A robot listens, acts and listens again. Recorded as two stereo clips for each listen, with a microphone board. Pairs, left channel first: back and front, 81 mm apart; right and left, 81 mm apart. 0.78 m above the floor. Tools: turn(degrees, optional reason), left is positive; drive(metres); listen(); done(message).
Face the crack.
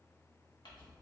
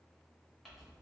listen()
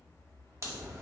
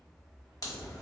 turn(degrees=-55, reason="The crack: 55° right.")
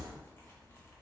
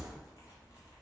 done("Found it: a crack, straight ahead, under 1 m away.")